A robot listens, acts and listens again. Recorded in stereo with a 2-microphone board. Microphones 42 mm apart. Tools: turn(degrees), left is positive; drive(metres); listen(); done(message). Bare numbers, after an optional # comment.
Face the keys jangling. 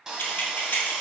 # The keys jangling: about 40° left or 140° left.
turn(40)
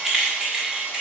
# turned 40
# So it is at 20° right.
turn(-20)
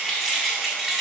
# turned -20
done("Found it: keys jangling, straight ahead, 2 to 4 m away.")